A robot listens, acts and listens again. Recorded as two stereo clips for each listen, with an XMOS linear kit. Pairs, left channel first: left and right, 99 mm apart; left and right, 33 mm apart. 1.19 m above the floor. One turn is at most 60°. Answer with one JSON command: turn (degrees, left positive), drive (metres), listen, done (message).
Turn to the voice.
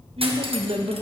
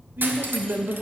{"turn": -60}
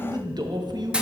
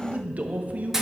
{"turn": -45}
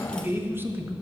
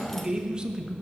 {"turn": -20}
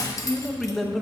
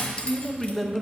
{"done": "Found it: a man speaking, straight ahead, under 1 m away."}